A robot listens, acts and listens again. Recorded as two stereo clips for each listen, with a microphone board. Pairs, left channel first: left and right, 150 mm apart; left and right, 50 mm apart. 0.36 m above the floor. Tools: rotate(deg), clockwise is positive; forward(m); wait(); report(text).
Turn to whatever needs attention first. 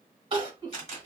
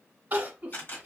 rotate(40)
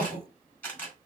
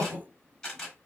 rotate(100)
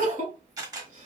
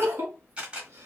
rotate(60)
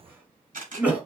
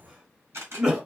rotate(10)
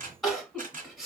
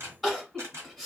report("Found it: crying, straight ahead.")